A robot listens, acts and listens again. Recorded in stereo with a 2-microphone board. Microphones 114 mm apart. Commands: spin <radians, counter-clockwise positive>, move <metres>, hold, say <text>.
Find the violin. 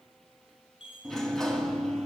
hold
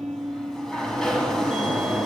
hold
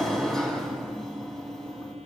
say I can't make out a violin to turn to.